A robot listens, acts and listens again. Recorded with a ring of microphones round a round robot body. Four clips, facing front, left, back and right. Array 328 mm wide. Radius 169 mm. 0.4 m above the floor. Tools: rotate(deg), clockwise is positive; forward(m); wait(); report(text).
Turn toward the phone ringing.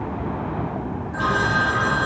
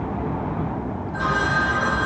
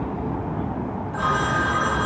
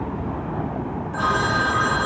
rotate(80)
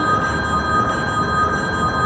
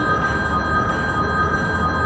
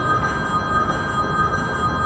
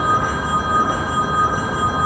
rotate(15)
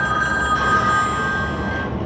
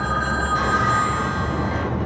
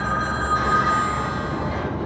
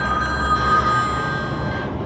report("Facing the phone ringing, 2 to 4 m away.")